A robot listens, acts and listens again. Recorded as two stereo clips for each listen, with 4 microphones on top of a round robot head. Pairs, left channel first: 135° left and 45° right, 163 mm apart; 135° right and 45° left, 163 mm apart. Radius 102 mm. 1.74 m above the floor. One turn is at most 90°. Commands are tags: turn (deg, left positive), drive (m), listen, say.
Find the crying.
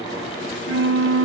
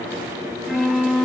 <listen/>
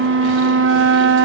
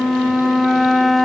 <listen/>
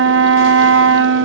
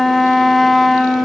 <say>I can't make out crying, only a flute.</say>